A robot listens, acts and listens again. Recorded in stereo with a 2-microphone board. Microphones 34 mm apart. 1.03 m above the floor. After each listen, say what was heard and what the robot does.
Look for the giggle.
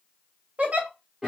The giggle: about 40° right or 140° right. Turn 40° right.
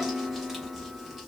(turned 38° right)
Keep listening.
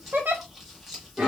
So it is at 100° right. Turn 100° right.
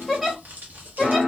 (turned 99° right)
Found it: a giggle, straight ahead.